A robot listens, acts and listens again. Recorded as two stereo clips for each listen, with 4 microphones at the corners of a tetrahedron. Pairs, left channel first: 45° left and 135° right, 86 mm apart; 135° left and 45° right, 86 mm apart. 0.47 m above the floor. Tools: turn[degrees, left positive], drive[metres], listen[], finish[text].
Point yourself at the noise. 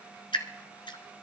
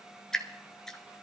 Thought: The dripping: 50° left.
Action: turn[50]
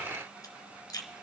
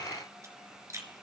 Action: finish[Facing the dripping, 1 to 2 m away.]